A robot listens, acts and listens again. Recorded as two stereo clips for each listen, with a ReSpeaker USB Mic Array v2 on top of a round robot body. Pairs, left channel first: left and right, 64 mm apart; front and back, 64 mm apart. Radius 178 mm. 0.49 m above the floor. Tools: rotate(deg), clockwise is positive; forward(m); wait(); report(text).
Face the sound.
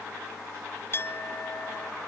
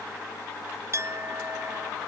rotate(-140)
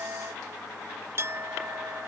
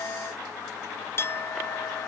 rotate(45)
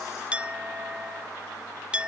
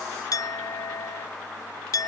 rotate(20)
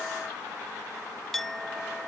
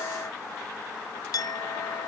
report("Found it: a clink, straight ahead.")